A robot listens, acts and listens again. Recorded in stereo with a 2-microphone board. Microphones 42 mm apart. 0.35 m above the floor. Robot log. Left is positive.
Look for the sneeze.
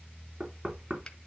cmd idle
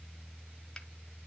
cmd idle
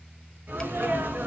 note: The sneeze: about 60° right or 120° right.
cmd yaw -60
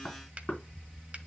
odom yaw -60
cmd idle
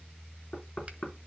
end: I heard a sneeze, but can't make it out now. It was about straight ahead or 60° right.